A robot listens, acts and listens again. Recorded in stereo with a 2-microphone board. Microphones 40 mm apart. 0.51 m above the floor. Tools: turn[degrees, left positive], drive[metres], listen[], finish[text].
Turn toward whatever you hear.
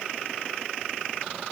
Action: listen[]
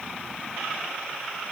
Action: listen[]
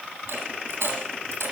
Action: turn[-90]
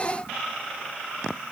Action: finish[Facing where the dropped coin came from. I can't hear it now.]